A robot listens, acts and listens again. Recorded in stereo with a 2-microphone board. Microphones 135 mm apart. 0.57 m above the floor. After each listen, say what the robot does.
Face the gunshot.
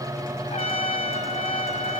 Keep listening.
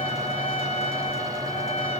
Keep listening.
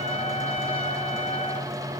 I can't make out a gunshot to turn to.